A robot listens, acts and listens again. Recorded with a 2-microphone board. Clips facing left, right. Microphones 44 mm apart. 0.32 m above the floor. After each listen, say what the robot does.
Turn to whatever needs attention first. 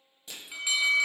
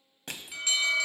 Turn 30° left.
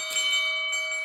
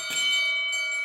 Turn 135° left.
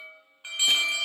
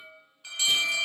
Turn 25° left.
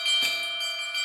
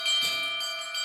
Facing the alarm, 1 to 2 m away.